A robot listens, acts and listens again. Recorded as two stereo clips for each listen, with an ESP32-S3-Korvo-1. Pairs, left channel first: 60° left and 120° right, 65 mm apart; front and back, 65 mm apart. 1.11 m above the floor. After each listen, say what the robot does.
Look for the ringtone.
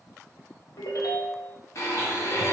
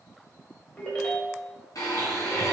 Turn 70° left.
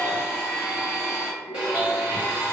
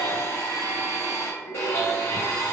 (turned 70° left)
Facing the ringtone.